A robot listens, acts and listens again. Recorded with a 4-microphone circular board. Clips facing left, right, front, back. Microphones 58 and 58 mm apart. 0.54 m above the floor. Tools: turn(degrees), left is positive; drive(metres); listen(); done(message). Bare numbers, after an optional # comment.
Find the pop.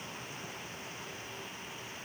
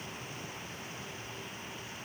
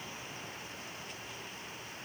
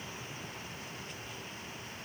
listen()
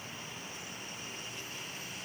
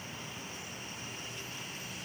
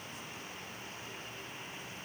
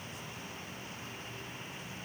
listen()
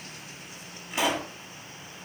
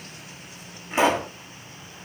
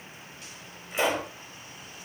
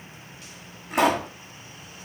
# The pop: 150° right.
turn(-150)
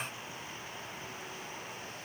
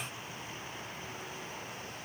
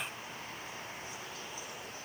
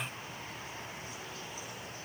done("Facing where the pop came from. I can't hear it now.")